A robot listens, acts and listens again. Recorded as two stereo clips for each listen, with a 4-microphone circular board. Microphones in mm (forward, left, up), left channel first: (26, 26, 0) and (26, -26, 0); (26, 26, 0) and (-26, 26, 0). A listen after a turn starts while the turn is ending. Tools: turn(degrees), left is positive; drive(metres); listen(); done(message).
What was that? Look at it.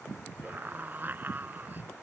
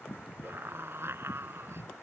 turn(degrees=-145)
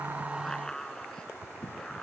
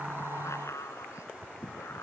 turn(degrees=10)
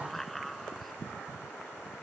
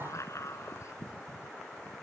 done("Facing the scream.")